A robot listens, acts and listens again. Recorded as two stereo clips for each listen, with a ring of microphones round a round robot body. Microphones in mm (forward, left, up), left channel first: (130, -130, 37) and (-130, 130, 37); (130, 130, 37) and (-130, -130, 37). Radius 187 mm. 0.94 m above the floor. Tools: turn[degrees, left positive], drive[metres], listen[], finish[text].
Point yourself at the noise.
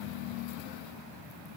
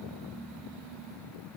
Action: listen[]
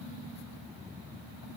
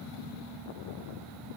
Action: listen[]
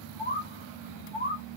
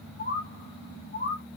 Thought: The bird: 60° left.
Action: turn[60]
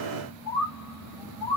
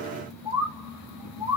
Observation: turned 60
Thought: The bird is now 10° right.
Action: turn[-10]
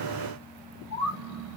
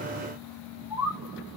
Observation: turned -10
Action: finish[Found it: a bird, straight ahead.]